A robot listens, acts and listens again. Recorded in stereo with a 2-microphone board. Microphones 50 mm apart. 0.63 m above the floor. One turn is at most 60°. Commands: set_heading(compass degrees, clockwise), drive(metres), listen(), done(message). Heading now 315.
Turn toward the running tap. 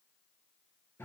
listen()
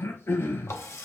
set_heading(255)
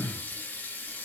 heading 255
set_heading(215)
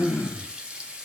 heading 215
set_heading(235)
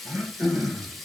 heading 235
done("Facing the running tap, under 1 m away.")